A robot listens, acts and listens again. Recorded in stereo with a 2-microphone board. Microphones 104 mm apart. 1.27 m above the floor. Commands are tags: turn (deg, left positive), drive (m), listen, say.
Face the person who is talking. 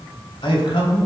<turn deg="60"/>
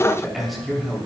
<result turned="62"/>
<say>Facing the man speaking.</say>